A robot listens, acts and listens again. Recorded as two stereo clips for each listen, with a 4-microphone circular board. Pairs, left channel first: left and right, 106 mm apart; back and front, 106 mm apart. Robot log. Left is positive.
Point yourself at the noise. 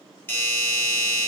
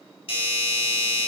note: The doorbell: 155° left.
cmd yaw +155
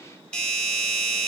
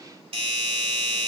note: The doorbell is now 10° left.
cmd yaw +10
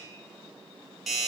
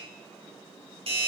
end: Found it: a doorbell, straight ahead, 2 to 4 m away.